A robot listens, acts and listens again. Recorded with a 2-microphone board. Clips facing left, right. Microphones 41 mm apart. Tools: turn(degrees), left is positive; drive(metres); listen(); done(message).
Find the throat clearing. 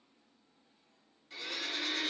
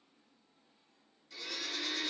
listen()
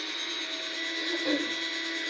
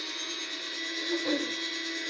turn(degrees=-30)
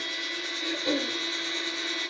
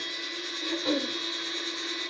turn(degrees=-140)
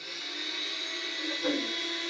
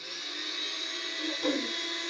turn(degrees=-60)
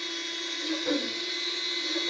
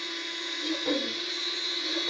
turn(degrees=-35)
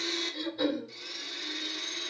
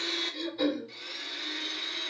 turn(degrees=-10)
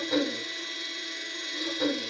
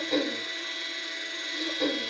done("Facing the throat clearing.")